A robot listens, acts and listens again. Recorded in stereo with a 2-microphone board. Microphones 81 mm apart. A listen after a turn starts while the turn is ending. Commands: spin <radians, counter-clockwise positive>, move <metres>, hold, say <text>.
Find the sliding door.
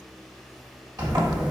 spin -0.96
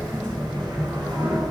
spin -1.22
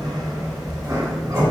spin -0.70
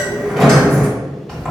say Facing the sliding door, 1 to 2 m away.